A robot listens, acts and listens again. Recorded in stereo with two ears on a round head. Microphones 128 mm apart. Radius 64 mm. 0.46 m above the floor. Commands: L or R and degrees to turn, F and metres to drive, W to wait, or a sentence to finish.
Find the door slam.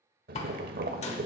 L45
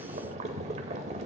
W
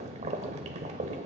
I heard a door slam, but can't make it out now. It was about straight ahead or 90° left.